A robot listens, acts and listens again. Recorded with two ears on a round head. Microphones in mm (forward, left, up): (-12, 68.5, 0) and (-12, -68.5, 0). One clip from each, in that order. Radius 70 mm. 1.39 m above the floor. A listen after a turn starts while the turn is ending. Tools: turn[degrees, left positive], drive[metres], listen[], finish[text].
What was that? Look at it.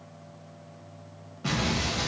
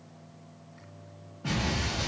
Thought: The explosion: about 55° left or 125° left.
Action: turn[55]
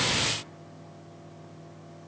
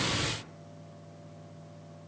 Action: listen[]
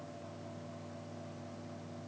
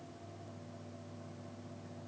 Action: finish[I heard an explosion, but can't make it out now. It was about straight ahead or 70° left.]